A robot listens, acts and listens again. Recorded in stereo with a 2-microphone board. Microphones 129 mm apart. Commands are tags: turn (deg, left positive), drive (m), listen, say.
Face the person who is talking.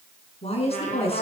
<turn deg="50"/>
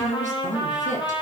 <turn deg="70"/>
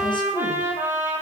<listen/>
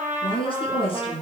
<turn deg="45"/>
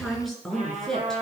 <say>Facing the woman speaking, over 4 m away.</say>